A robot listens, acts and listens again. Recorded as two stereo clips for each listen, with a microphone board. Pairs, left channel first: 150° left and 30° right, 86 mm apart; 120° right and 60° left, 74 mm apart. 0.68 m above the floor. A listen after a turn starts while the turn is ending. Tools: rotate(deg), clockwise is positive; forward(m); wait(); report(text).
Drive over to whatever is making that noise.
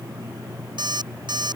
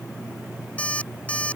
rotate(50)
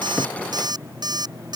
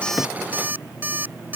forward(1.0)
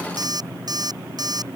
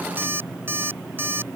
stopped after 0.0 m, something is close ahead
report("Blocked. The alarm clock is further on, straight ahead.")